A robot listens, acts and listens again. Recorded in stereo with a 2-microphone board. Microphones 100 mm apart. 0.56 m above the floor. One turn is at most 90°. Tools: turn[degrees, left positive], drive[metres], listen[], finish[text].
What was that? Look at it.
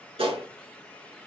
Thought: The gunshot: about 65° right or 115° right.
Action: turn[-65]
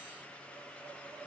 Action: listen[]
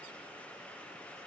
Action: finish[I heard a gunshot, but can't make it out now. It was about straight ahead or 50° right.]